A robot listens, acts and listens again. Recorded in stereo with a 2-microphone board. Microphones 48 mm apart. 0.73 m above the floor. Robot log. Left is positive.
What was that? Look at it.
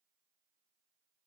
cmd idle
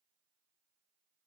cmd idle
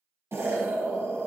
note: The explosion: about 70° right or 110° right.
cmd yaw -70
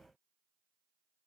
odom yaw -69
cmd idle
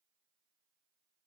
end: I heard an explosion, but can't make it out now. It was about straight ahead or 40° right.